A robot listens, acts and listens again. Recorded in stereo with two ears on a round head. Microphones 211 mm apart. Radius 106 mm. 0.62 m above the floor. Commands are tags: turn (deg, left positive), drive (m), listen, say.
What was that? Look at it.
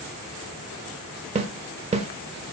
<turn deg="-25"/>
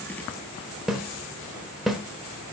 <say>Found it: a snare drum, straight ahead.</say>